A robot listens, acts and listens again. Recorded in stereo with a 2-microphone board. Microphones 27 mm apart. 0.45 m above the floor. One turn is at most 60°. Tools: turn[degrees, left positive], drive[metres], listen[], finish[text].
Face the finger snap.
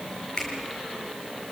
Thought: The finger snap: about 30° left or 150° left.
Action: turn[30]
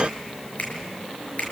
Thought: So it is at 125° left.
Action: turn[60]
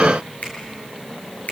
Thought: The finger snap is now 65° left.
Action: turn[60]
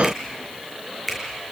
Action: finish[Found it: a finger snap, straight ahead.]